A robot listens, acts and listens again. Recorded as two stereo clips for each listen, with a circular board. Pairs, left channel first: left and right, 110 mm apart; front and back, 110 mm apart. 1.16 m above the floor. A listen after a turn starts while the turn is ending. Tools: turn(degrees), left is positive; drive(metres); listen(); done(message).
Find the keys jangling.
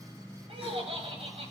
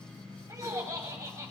listen()
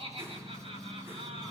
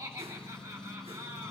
listen()
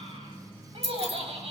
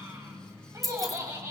turn(degrees=-90)
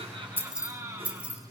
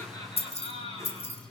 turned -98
turn(degrees=-15)
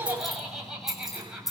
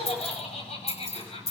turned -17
done("Found it: keys jangling, straight ahead.")